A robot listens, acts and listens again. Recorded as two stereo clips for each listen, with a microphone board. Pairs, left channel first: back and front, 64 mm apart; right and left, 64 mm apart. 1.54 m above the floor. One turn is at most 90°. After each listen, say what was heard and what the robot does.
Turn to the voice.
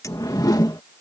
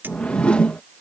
Keep listening.
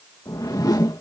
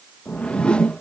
Keep listening.
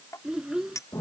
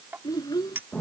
The child speaking: 80° right. Turn 80° right.
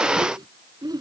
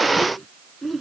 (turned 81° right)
Facing the child speaking.